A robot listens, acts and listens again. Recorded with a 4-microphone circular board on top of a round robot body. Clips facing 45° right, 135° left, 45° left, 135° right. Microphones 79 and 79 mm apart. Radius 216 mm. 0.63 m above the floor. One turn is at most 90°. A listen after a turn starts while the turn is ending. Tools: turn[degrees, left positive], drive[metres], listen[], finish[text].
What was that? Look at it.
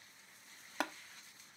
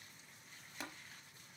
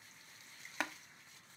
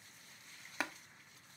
Thought: The tapping: 50° right.
Action: turn[-50]
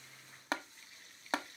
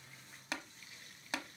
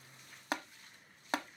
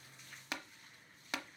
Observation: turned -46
Action: finish[Facing the tapping.]